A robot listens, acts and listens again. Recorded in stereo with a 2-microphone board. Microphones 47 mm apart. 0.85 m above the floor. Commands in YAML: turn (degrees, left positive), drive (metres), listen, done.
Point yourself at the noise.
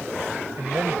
turn: -65
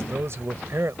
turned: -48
turn: -65
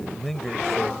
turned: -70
done: "Facing the man speaking."